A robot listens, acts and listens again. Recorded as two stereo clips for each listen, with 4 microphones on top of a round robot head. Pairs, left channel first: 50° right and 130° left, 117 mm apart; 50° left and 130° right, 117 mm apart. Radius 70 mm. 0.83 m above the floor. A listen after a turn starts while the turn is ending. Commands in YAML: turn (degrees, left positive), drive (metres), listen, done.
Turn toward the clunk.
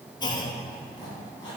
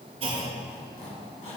turn: -100
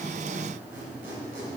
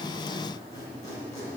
done: "I heard a clunk from this way, but can't make it out now."